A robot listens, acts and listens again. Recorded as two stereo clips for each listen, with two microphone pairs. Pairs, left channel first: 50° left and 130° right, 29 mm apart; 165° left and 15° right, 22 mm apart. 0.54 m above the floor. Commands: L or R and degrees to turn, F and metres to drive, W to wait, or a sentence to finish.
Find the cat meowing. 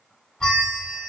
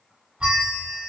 W
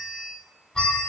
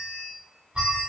W
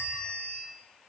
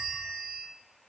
I can't make out a cat meowing to turn to.